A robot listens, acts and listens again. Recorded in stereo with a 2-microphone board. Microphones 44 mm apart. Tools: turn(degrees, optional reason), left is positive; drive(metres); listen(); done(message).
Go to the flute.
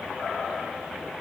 listen()
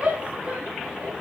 listen()
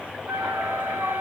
turn(degrees=-55, reason="The flute: about 55° right or 125° right.")
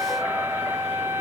turn(degrees=-65, reason="So it is at 65° right.")
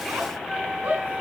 turn(degrees=-20, reason="The flute is now 20° right.")
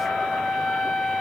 drive(metres=1.0)
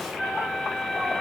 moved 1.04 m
drive(metres=1.0)
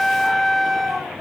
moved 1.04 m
drive(metres=1.0)
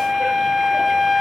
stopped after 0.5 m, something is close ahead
done("I am next to the flute.")